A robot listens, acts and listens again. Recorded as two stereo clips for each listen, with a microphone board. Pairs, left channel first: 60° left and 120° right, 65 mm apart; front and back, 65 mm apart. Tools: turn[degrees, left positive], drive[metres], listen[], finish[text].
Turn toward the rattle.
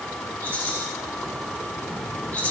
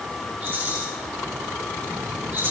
Thought: The rattle: 125° left.
Action: turn[125]
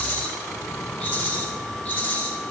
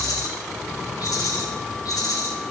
Action: finish[Found it: a rattle, straight ahead, over 4 m away.]